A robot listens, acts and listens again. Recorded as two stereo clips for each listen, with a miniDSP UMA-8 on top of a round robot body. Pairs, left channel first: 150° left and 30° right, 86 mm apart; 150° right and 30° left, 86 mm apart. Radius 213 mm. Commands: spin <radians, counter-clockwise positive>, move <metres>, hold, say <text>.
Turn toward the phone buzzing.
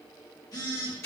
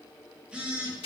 spin 1.83
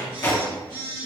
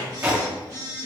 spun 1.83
spin -0.26
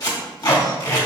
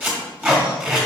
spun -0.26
hold
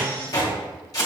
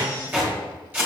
hold
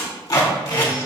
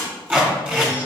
say Facing where the phone buzzing came from. I can't hear it now.